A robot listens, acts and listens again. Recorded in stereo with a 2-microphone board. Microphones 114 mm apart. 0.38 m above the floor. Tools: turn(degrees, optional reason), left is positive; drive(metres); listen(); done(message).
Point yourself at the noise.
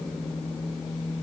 listen()
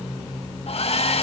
turn(degrees=60, reason="The hair dryer: about 60° left or 120° left.")
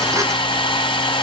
turn(degrees=50, reason="So it is at 50° left.")
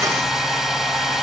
done("Facing the hair dryer, 1 to 2 m away.")